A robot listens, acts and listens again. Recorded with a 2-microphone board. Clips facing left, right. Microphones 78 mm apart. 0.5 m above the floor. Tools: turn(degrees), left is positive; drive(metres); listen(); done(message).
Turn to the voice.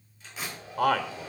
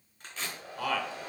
turn(degrees=55)
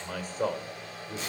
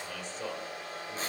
turn(degrees=55)
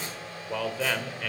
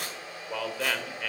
done("Facing the man speaking.")